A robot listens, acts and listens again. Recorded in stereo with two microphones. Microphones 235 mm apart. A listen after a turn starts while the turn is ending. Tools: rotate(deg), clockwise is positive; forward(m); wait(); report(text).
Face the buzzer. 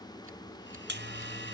rotate(50)
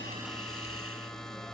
report("Facing the buzzer.")